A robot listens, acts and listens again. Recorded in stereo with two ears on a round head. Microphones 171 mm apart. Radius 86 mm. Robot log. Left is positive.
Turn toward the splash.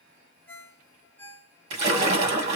note: The splash: about 35° right or 145° right.
cmd yaw -35
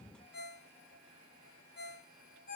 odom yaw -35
cmd idle
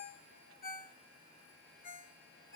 end: I heard a splash, but can't make it out now. It was about straight ahead or 110° right.